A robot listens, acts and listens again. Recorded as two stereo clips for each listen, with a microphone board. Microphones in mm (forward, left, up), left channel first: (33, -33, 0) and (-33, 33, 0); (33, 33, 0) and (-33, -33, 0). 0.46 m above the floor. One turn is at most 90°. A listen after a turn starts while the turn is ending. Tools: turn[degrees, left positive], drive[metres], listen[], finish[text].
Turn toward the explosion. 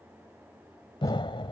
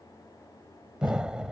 Thought: The explosion: 55° right.
Action: turn[-55]
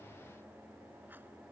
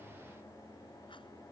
Action: finish[Facing where the explosion came from. I can't hear it now.]